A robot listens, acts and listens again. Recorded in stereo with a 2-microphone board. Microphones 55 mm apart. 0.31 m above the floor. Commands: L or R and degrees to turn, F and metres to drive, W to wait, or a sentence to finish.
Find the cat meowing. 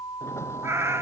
R60
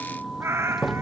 R55
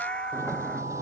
L20
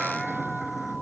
W
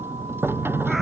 W
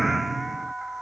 Facing where the cat meowing came from. I can't hear it now.